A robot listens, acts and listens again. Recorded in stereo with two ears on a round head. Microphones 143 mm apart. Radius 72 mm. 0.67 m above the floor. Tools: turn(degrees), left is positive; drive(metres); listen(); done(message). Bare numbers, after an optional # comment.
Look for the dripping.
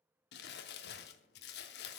listen()
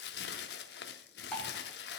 turn(30)
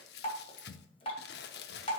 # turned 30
# So it is at 145° left.
turn(145)
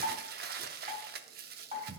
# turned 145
# The dripping is now 35° right.
turn(-35)
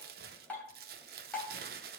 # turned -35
# The dripping is now 10° left.
turn(10)
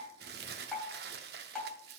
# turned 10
done("Found it: dripping, straight ahead, 2 to 4 m away.")